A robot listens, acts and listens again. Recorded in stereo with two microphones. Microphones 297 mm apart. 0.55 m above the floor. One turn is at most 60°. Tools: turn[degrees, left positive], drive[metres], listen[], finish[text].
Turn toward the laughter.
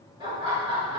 Thought: The laughter: about 20° right or 160° right.
Action: turn[-20]
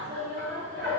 Thought: The laughter: about 40° right or 140° right.
Action: turn[-40]
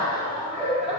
Thought: So it is at 20° right.
Action: turn[-20]
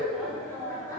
Thought: The laughter is now 15° left.
Action: turn[15]
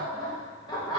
Thought: The laughter is now 15° left.
Action: turn[15]
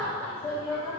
Thought: The laughter is now 10° left.
Action: turn[10]
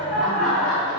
Action: finish[Found it: laughter, straight ahead.]